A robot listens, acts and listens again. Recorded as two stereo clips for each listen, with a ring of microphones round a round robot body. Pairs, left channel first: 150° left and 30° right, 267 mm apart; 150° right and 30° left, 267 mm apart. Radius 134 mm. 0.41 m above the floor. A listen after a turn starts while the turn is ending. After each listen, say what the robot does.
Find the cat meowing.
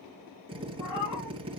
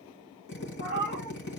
Turn 160° left.
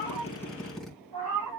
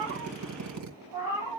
Turn 50° right.
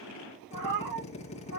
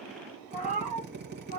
Turn 35° right.
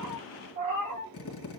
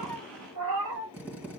Facing the cat meowing.